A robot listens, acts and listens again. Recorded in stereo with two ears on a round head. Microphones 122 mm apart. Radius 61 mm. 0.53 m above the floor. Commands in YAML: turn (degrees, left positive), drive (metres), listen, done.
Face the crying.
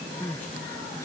turn: 20
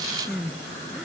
done: "Facing the crying."